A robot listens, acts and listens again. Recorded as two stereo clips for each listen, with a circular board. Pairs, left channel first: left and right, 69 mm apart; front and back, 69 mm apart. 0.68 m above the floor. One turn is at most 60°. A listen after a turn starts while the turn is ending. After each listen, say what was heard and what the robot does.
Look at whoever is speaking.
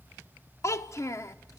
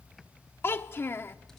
The child speaking: 50° left. Turn 50° left.
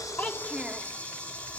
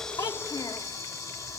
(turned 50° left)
Keep listening.
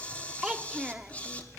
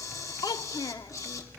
The child speaking is now 10° right. Turn 10° right.
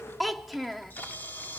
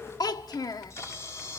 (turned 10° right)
Facing the child speaking, under 1 m away.